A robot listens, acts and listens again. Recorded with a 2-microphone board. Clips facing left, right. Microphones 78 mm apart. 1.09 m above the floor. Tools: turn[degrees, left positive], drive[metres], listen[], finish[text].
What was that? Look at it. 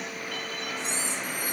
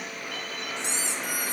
Action: turn[-90]
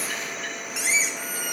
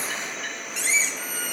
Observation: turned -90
Thought: So it is at 10° left.
Action: turn[10]
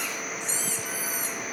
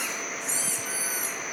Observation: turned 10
Action: finish[Facing the squeak.]